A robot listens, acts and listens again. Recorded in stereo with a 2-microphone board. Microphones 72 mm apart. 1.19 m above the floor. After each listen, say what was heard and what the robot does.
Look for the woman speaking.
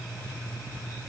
Keep listening.
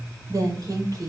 The woman speaking: about 55° right or 125° right. Turn 55° right.
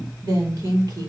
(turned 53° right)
So it is at 65° right. Turn 65° right.
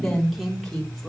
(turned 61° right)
Facing the woman speaking, 2 to 4 m away.